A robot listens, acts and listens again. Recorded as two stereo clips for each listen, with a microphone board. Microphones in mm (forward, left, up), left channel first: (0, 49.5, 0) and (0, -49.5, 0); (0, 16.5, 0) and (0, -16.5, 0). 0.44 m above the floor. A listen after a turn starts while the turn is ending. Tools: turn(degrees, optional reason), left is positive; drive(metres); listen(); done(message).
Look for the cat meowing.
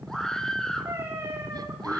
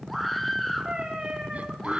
turn(degrees=-25, reason="The cat meowing: about 25° right or 155° right.")
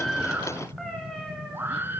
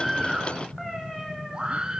done("Facing the cat meowing.")